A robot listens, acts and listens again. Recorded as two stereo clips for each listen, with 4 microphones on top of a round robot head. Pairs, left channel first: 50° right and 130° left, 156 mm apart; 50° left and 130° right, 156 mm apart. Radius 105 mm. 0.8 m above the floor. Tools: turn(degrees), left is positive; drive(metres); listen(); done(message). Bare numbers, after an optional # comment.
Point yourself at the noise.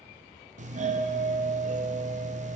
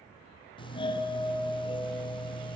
# The doorbell: 100° left.
turn(100)
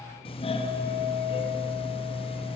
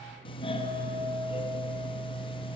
done("Facing the doorbell.")